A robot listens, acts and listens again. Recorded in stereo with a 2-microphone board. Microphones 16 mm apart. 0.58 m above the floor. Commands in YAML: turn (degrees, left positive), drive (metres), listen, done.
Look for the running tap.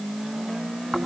listen: true
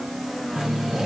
turn: -50
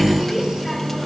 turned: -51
done: "Facing the running tap, over 4 m away."